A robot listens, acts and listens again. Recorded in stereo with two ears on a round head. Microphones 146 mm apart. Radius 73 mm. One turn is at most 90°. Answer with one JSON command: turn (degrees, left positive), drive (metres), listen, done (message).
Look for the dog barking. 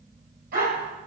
{"turn": -65}
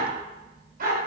{"turn": -55}
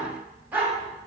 {"turn": -10}
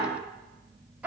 {"turn": -10}
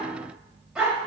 {"done": "Found it: a dog barking, straight ahead."}